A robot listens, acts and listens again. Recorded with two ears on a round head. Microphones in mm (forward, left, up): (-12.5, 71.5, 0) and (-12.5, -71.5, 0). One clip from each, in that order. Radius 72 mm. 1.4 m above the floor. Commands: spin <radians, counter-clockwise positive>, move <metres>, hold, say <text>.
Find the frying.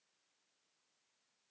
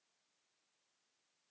hold
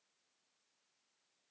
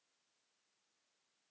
hold
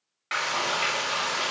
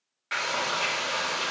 spin 0.35
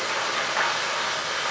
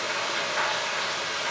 spin 2.44
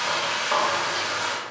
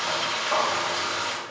spin 0.52
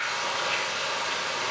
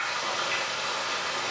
spin -0.17
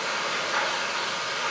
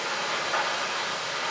say Facing the frying.